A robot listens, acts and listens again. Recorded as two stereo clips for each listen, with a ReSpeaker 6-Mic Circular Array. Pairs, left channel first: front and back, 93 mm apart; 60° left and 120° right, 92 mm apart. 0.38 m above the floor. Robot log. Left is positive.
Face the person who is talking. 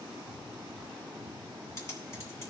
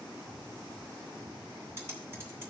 cmd idle
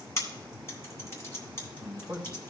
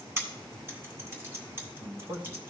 note: The man speaking: 95° right.
cmd yaw -95
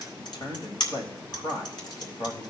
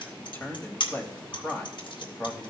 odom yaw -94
end: Facing the man speaking, 1 to 2 m away.